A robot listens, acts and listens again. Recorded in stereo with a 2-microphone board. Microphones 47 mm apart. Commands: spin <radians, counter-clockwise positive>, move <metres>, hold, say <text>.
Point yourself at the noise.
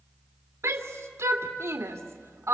spin -1.22
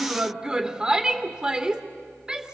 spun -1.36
spin -0.26
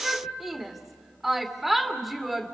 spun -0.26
say Found it: a shout, straight ahead.